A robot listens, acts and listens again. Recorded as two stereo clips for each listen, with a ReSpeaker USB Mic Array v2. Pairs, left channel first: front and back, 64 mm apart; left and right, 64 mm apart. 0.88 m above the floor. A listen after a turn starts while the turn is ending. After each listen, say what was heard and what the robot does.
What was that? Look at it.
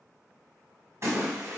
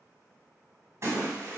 The splash: 135° right. Turn 135° right.
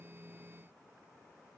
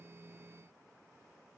I heard a splash from this way, but can't make it out now.